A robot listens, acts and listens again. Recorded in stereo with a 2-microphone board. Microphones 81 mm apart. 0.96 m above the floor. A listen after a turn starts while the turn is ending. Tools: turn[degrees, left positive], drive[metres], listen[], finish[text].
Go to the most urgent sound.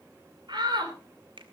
Thought: The shout: about 60° right or 120° right.
Action: turn[-60]
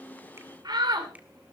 Thought: So it is at 60° right.
Action: turn[-60]
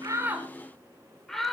Action: drive[1.0]
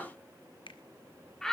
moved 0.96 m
Action: drive[1.0]
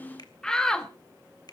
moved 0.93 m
Thought: The shout is now 10° left.
Action: turn[10]
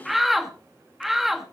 Action: drive[1.0]
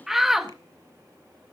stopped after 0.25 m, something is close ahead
Action: finish[Arrived at the shout, straight ahead.]